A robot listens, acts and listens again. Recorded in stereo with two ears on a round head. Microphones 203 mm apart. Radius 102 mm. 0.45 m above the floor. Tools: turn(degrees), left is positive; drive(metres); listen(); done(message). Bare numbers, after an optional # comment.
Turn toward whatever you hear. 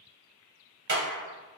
# The clap: about 50° right or 130° right.
turn(-50)
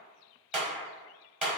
done("Facing the clap, 1 to 2 m away.")